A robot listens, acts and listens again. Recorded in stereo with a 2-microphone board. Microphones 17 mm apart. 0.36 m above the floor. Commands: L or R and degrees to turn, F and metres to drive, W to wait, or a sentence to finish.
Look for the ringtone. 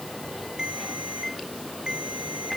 R65
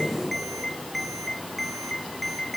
Found it: a ringtone, straight ahead.